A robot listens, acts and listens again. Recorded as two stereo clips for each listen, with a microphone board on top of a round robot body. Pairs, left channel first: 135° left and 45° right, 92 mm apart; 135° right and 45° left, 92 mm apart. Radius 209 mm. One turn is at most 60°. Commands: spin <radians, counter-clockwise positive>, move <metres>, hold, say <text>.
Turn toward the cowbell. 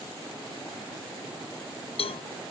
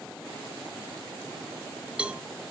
spin 1.05
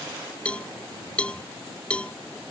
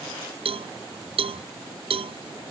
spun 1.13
spin 1.05
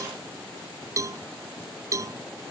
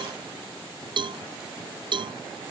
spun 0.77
spin 0.26
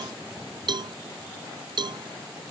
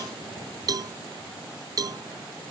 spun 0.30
say Found it: a cowbell, straight ahead.